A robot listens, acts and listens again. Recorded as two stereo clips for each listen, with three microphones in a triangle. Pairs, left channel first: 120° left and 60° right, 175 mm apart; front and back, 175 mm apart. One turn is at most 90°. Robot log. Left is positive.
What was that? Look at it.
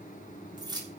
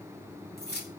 end: Found it: keys jangling, straight ahead.